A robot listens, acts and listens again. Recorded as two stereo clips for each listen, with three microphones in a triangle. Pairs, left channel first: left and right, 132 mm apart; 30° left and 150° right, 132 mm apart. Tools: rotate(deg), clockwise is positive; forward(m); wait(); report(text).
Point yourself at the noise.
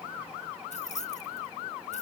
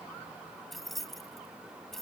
rotate(-120)
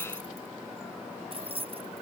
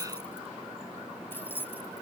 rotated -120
rotate(45)
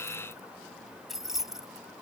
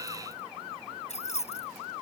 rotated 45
report("Found it: keys jangling, straight ahead.")